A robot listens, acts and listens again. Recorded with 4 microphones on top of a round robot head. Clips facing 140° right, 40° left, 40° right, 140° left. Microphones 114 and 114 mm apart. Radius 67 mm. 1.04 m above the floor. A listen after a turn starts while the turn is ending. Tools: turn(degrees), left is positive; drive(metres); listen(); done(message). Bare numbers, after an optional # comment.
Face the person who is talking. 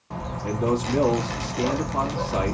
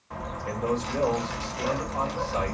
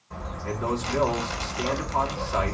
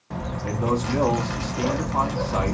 # The man speaking: 145° right.
turn(-145)
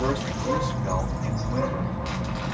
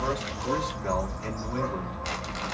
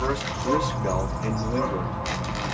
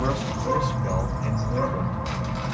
listen()
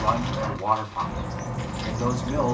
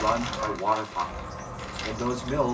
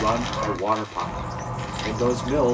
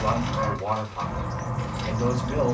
# The man speaking is now 55° right.
turn(-55)
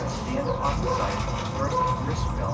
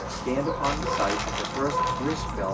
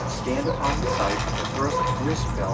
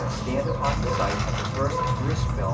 listen()
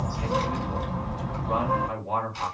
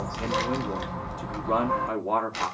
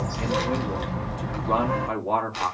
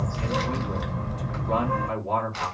done("Facing the man speaking, 2 to 4 m away.")